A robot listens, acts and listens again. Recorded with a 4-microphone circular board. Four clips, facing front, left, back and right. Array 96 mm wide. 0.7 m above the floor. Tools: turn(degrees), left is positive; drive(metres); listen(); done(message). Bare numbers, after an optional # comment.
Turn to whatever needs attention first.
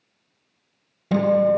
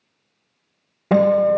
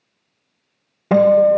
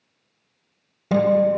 listen()
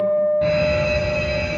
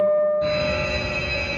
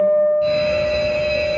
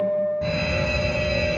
# The alarm: 20° right.
turn(-20)
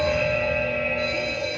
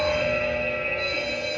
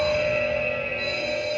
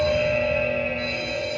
done("Found it: an alarm, straight ahead.")